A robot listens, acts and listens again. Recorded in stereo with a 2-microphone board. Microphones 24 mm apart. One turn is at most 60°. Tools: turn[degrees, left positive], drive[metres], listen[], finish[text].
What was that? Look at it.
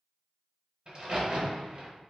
Thought: The crack: about 35° right or 145° right.
Action: turn[-35]
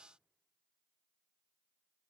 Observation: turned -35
Action: listen[]
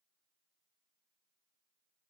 Action: finish[I heard a crack, but can't make it out now. It was about straight ahead or 110° right.]